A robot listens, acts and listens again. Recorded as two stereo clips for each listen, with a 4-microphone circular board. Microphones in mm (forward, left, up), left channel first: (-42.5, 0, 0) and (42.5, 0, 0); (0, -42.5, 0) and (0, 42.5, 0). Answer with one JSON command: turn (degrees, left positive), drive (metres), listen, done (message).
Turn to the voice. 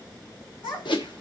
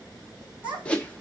{"turn": 160}
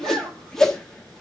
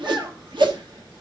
{"listen": true}
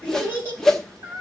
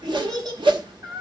{"turn": 60}
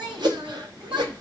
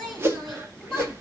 {"done": "Facing the child speaking, over 4 m away."}